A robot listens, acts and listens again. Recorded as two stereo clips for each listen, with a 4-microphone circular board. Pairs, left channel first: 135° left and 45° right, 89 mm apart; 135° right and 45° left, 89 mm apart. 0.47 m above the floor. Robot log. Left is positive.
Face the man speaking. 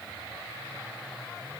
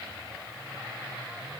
cmd idle
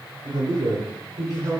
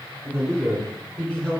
note: The man speaking: 60° right.
cmd yaw -60
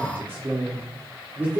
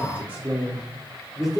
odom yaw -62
note: The man speaking is now 40° right.
cmd yaw -40
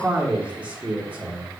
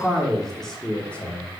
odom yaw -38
note: The man speaking is now 95° right.
cmd yaw -95
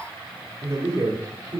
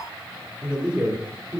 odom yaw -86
note: The man speaking is now 20° right.
cmd yaw -20
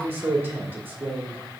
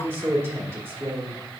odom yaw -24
end: Found it: a man speaking, straight ahead.